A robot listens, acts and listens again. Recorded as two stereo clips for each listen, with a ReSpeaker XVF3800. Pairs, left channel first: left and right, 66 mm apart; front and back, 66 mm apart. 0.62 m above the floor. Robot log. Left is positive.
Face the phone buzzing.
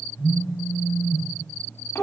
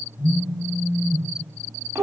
note: The phone buzzing: 35° left.
cmd yaw +35
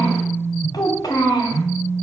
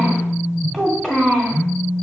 note: The phone buzzing is now 20° right.
cmd yaw -20
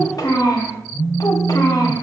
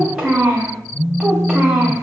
end: Found it: a phone buzzing, straight ahead.